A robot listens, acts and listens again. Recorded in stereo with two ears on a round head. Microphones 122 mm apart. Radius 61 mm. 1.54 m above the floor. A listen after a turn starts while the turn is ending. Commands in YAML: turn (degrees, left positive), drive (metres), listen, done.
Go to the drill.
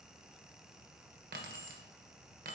listen: true
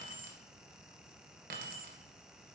listen: true
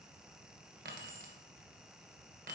done: "I can't make out a drill, only keys jangling."